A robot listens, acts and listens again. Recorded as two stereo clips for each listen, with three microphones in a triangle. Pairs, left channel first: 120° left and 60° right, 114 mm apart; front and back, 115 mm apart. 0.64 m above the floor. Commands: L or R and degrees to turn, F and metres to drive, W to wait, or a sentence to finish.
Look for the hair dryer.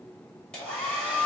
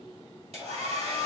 R160
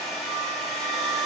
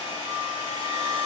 L35
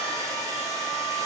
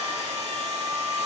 Facing the hair dryer, 2 to 4 m away.